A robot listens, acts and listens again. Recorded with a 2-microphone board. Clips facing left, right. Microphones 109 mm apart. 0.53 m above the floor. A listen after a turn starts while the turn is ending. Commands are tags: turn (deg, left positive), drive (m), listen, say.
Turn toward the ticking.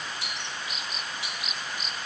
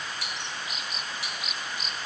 <turn deg="20"/>
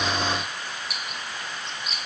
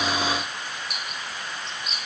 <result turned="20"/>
<say>Facing the ticking, 2 to 4 m away.</say>